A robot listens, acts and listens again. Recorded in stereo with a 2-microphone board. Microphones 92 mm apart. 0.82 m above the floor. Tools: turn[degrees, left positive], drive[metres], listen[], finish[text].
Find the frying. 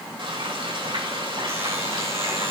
Thought: The frying: about 65° right or 115° right.
Action: turn[-65]
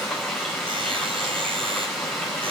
Action: finish[Found it: frying, straight ahead.]